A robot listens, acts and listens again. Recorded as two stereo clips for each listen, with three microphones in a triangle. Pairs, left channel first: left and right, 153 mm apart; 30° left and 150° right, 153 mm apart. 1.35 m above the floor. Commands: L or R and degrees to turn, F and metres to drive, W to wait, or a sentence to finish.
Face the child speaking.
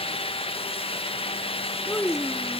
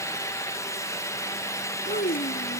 L10
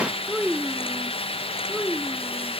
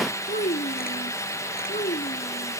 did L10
R10
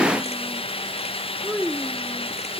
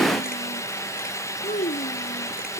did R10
R10
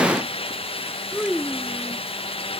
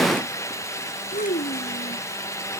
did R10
Facing the child speaking.